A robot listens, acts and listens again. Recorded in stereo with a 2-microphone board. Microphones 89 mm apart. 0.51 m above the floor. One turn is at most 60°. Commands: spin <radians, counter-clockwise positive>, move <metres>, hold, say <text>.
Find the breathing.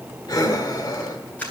spin 0.87
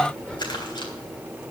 spin 0.26
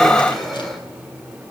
say Facing the breathing, 1 to 2 m away.